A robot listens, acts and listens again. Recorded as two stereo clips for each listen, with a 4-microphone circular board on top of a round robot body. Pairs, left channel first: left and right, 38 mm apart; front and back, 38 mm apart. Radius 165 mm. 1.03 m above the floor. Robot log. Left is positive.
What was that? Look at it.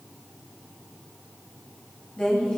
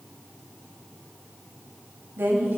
note: The woman speaking: 155° left.
cmd yaw +155
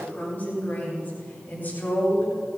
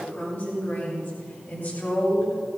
note: The woman speaking is now 45° left.
cmd yaw +45
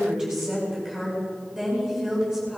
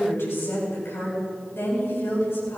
note: The woman speaking is now 10° right.
cmd yaw -10
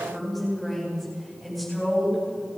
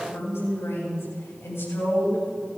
end: Facing the woman speaking.